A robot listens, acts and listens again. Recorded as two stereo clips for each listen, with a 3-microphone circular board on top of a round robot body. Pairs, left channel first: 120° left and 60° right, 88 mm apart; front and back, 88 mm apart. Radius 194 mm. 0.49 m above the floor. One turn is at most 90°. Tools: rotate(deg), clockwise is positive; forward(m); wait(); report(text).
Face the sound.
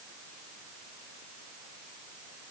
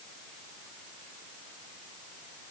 wait()
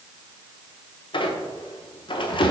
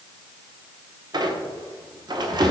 rotate(-90)
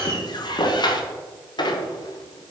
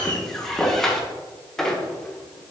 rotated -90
rotate(-85)
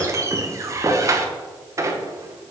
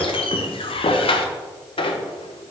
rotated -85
report("Found it: a squeak, straight ahead, under 1 m away.")